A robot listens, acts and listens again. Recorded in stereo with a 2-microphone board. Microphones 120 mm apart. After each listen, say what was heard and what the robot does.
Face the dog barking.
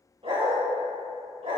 The dog barking: about 55° right or 125° right. Turn 55° right.
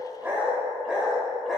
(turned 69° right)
Found it: a dog barking, straight ahead.